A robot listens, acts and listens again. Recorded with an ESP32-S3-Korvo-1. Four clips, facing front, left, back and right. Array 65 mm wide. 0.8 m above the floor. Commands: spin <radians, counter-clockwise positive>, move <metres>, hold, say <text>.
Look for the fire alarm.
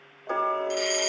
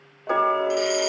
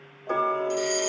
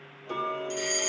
spin 0.35
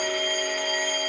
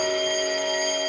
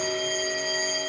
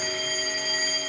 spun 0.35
say Found it: a fire alarm, straight ahead.